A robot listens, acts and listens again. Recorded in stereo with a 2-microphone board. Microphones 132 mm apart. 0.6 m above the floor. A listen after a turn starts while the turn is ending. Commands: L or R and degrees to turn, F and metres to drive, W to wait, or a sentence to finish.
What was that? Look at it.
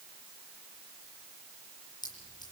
L30
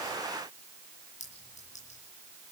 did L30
L115
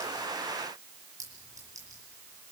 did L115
R25
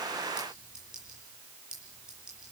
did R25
Facing the clink.